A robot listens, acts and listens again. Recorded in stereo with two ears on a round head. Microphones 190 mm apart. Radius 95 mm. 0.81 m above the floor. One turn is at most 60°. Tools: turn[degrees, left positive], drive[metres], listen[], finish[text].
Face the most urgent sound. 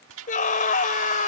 Thought: The scream: about 40° left or 140° left.
Action: turn[40]
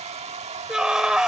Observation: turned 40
Action: finish[Facing the scream.]